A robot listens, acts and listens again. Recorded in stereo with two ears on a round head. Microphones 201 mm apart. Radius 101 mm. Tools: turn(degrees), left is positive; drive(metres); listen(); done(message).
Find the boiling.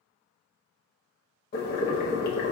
turn(degrees=45)
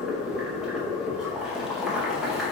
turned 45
done("Facing the boiling.")